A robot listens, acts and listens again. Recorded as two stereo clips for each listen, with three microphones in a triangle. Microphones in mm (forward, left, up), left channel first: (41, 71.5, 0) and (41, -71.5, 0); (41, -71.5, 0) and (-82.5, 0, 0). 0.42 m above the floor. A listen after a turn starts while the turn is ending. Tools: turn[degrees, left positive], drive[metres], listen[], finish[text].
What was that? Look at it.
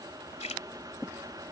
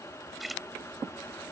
Thought: The splash: 60° left.
Action: turn[60]
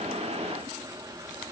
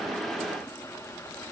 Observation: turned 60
Action: finish[Facing where the splash came from. I can't hear it now.]